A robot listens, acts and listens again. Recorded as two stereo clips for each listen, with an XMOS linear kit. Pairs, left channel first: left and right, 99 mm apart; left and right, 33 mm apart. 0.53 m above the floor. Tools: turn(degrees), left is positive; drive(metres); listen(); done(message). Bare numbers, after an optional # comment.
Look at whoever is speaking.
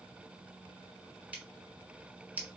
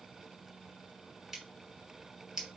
listen()
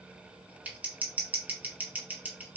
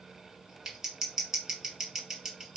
listen()
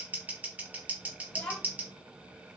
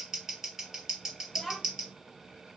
turn(30)
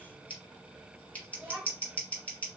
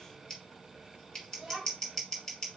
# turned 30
# So it is at 20° right.
turn(-20)
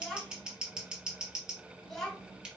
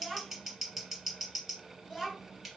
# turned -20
done("Facing the child speaking, 2 to 4 m away.")